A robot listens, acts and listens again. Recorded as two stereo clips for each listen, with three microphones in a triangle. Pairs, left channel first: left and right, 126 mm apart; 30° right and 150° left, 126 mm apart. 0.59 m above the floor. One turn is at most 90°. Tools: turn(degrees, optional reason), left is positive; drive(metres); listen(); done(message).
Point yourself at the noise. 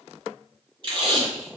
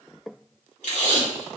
turn(degrees=-40, reason="The tape being pulled: 40° right.")
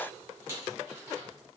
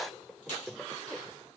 listen()
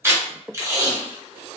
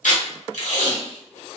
turn(degrees=-20, reason="The tape being pulled is now 20° right.")
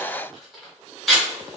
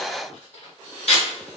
done("Found it: tape being pulled, straight ahead.")